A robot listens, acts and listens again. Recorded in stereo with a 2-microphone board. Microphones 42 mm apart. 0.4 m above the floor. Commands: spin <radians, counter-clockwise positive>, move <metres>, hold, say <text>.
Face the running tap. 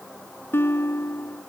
hold
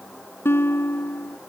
hold
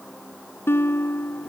say I can't make out a running tap, only a guitar.